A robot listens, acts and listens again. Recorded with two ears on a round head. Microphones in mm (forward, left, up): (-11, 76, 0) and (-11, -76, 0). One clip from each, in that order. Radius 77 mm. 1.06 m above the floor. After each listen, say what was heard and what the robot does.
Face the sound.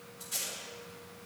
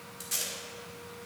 The tape being pulled: about 70° right or 110° right. Turn 70° right.
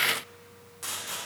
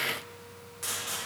Facing the tape being pulled, 2 to 4 m away.